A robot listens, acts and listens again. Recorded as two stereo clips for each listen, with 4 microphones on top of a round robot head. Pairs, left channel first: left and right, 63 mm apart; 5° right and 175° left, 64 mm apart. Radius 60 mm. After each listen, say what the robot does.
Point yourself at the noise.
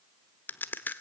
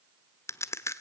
Turn 30° left.
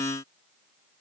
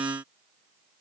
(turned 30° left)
Facing where the crack came from. I can't hear it now.